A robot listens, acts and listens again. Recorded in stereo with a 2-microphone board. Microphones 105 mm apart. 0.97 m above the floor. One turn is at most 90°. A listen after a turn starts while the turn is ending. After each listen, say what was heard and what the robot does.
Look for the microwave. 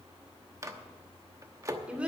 The microwave: about 30° right or 150° right. Turn 30° right.
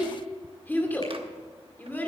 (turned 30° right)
Keep listening.
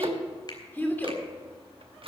So it is at 120° right. Turn 90° right.
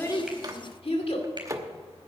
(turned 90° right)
The microwave is now 30° right. Turn 30° right.
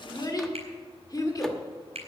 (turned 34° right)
Keep listening.
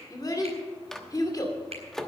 Facing the microwave.